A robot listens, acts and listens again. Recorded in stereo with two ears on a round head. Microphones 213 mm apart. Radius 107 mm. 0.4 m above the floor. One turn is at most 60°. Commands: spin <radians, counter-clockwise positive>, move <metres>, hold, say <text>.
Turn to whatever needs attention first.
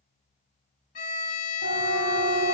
spin -1.05
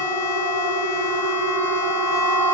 spin -0.70
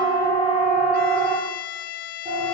spin -0.26
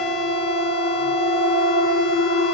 say Facing the siren.